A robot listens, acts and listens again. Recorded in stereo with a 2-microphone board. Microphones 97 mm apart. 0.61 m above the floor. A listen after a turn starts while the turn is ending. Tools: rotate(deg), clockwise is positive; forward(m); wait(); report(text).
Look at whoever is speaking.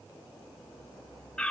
wait()
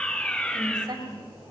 rotate(45)
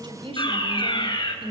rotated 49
rotate(80)
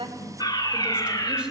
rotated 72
rotate(10)
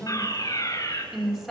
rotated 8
report("Found it: a woman speaking, straight ahead.")